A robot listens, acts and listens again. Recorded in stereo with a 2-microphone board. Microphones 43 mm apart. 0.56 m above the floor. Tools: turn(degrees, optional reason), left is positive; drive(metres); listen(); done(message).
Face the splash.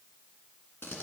listen()
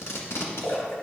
turn(degrees=60, reason="The splash: about 60° left or 120° left.")
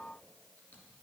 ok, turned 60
listen()
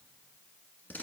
done("I heard a splash, but can't make it out now. It was about straight ahead or 60° left.")